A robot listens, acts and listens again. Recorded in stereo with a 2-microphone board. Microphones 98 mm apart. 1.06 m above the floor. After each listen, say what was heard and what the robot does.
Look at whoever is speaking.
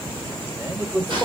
The man speaking: about 25° right or 155° right. Turn 25° right.
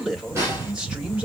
Turn 30° right.
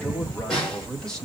Facing the man speaking.